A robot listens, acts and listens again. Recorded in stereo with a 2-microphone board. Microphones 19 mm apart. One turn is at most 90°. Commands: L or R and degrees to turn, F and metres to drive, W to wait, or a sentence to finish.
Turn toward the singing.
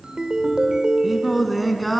L30
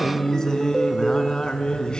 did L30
L90
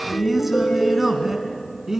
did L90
R20
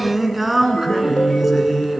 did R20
R10
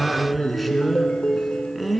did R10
Found it: singing, straight ahead, 2 to 4 m away.